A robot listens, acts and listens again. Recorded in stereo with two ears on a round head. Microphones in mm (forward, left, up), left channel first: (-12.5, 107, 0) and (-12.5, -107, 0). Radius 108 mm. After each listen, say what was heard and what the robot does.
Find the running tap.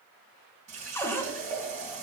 The running tap: about 30° right or 150° right. Turn 30° right.
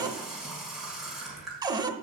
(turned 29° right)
Found it: a running tap, straight ahead.